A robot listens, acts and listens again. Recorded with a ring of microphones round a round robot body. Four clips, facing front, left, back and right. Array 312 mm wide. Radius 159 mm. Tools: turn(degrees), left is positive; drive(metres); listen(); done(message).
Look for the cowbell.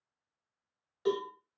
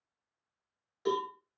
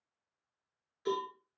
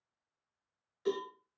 turn(degrees=35)
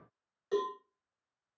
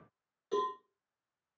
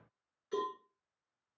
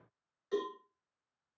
turn(degrees=25)
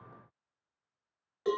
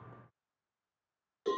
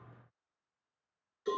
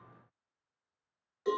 turn(degrees=10)
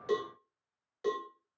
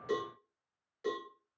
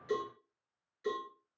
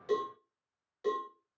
done("Found it: a cowbell, straight ahead.")